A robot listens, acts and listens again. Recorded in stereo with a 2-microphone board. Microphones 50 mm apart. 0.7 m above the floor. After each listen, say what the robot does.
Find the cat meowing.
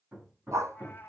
Turn 40° left.
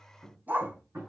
Keep listening.
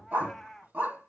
Found it: a cat meowing, straight ahead, 1 to 2 m away.